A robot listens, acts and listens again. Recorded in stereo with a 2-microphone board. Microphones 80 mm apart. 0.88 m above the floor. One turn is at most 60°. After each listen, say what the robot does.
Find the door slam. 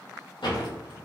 Turn 60° left.
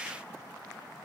Turn 30° left.
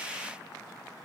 I heard a door slam from this way, but can't make it out now.